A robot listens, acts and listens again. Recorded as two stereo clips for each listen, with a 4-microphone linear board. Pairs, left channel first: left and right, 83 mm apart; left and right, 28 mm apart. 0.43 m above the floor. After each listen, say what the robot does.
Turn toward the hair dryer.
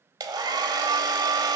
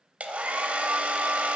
Turn 55° right.
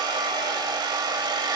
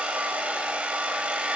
Turn 65° right.
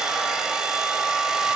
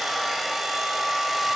Turn 10° right.
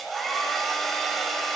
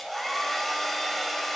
Facing the hair dryer.